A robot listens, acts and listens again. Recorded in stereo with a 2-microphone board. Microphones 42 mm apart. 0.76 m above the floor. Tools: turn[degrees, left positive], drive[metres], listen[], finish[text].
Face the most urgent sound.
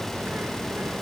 Action: listen[]
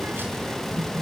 Action: listen[]
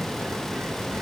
Action: finish[I can't make out anything urgent, only a bird.]